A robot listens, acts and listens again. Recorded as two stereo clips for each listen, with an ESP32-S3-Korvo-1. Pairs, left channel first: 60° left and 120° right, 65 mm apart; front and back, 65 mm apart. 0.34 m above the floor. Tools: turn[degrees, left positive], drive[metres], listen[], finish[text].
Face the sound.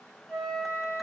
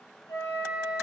Thought: The flute: 25° right.
Action: turn[-25]
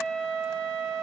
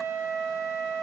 Action: finish[Facing the flute.]